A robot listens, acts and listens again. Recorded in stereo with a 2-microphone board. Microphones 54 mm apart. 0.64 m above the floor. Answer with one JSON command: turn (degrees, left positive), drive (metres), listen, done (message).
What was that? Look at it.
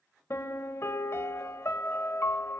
{"turn": 55}
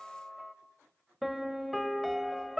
{"done": "Facing the piano, under 1 m away."}